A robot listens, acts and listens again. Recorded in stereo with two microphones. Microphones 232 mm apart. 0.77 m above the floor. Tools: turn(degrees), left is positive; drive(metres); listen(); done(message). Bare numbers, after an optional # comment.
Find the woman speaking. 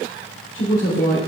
# The woman speaking: about 60° left or 120° left.
turn(60)
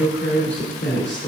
# So it is at 55° left.
turn(55)
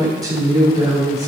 # The woman speaking is now 15° right.
turn(-15)
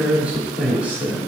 done("Found it: a woman speaking, straight ahead, 1 to 2 m away.")